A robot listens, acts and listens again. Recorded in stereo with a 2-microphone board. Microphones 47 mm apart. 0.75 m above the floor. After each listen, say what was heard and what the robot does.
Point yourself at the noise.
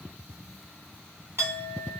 The clink: about 70° right or 110° right. Turn 70° right.
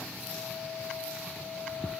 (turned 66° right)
So it is at 40° right. Turn 40° right.
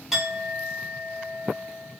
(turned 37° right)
Found it: a clink, straight ahead.